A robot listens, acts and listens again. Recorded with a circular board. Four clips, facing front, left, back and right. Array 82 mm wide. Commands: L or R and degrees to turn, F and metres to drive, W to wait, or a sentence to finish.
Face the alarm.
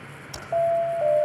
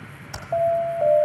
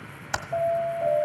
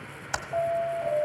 L65
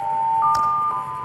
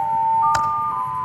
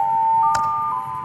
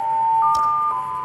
R30
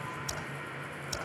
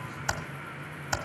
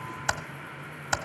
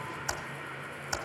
W
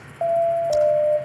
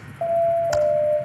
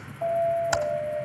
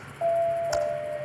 L20
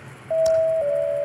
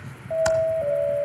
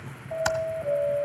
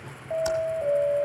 Facing the alarm.